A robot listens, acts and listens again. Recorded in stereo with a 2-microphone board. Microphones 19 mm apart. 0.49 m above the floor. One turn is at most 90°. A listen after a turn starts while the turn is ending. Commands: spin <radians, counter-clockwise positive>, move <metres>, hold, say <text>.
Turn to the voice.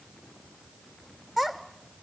spin -0.52
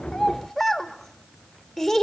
spin 0.17
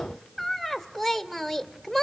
say Found it: a child speaking, straight ahead, 1 to 2 m away.